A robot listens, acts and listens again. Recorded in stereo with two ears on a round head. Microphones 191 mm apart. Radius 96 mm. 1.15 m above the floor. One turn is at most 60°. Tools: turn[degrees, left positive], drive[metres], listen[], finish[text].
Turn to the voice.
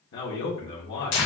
Thought: The man speaking: about 60° left or 120° left.
Action: turn[60]
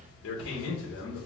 Thought: So it is at 60° left.
Action: turn[60]
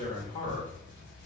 Thought: The man speaking is now 30° left.
Action: turn[30]
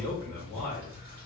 Action: finish[Facing the man speaking.]